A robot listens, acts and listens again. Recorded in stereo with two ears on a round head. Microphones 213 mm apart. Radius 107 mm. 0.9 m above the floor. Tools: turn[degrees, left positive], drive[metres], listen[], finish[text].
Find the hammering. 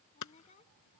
Action: turn[90]
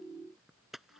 Action: finish[Found it: hammering, straight ahead.]